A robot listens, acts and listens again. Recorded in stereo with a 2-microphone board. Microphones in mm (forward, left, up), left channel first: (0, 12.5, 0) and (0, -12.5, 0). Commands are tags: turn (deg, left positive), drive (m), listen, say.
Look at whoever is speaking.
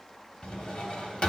<listen/>
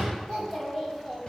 <turn deg="30"/>
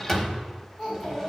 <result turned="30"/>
<turn deg="125"/>
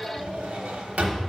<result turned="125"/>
<turn deg="30"/>
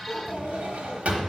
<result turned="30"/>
<turn deg="10"/>
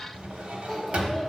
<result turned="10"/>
<say>Facing the child speaking.</say>